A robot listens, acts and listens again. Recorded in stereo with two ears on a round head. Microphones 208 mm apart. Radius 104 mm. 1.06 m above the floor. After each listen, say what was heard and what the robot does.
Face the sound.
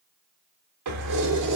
Turn 90° right.
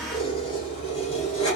So it is at 30° left. Turn 30° left.
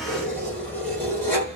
The keys jangling is now 10° left. Turn 10° left.
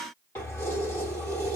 The keys jangling is now 10° left. Turn 10° left.
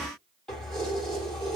Found it: keys jangling, straight ahead, 2 to 4 m away.